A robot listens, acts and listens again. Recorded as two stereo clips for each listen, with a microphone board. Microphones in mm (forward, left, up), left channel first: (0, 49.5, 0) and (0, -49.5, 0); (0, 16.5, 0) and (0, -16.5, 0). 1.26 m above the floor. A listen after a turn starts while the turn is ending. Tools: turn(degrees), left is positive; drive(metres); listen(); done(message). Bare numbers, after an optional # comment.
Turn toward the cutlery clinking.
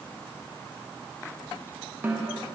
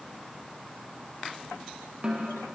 listen()
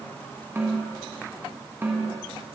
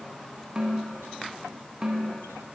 listen()
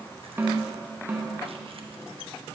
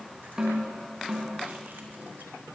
done("I can't make out cutlery clinking to turn to.")